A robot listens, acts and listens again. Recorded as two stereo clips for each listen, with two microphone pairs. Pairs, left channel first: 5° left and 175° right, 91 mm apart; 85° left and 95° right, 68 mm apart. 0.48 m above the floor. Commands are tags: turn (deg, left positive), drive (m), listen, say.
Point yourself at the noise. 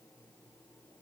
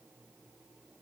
<listen/>
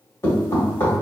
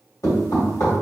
<turn deg="65"/>
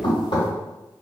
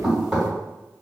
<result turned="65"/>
<say>Found it: knocking, straight ahead, 1 to 2 m away.</say>